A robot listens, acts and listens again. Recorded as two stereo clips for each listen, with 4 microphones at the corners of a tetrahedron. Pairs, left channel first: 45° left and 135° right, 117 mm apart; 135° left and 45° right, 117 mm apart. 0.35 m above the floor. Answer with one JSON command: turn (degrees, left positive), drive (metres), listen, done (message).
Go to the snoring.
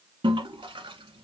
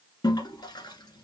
{"listen": true}
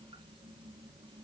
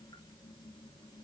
{"listen": true}
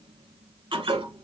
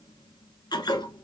{"done": "I can't make out snoring to turn to."}